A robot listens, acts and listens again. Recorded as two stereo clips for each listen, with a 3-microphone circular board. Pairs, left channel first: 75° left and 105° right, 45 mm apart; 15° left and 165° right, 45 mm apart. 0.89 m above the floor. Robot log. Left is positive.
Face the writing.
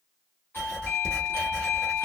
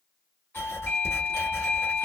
end: Facing the writing.